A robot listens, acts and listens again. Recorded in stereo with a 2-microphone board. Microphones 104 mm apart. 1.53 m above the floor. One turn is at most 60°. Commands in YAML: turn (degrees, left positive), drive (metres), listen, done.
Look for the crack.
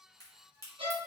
turn: 35
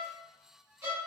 listen: true
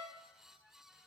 done: "I heard a crack, but can't make it out now. It was about straight ahead or 110° left."